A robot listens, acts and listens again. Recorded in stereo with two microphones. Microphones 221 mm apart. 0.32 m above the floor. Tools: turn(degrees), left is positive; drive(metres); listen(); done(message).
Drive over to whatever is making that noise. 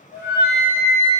turn(degrees=-30)
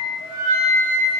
turn(degrees=20)
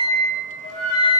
drive(metres=1.0)
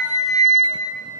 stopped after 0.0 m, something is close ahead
done("Something is in my way. I am facing the flute but have not reached it.")